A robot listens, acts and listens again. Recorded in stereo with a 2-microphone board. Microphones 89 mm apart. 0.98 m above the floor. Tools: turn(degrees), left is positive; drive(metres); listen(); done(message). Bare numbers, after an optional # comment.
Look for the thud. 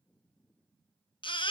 listen()
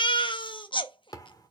# The thud: about 40° left or 140° left.
turn(40)
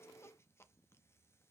listen()
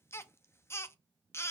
done("I heard a thud, but can't make it out now. It was about straight ahead or 100° left.")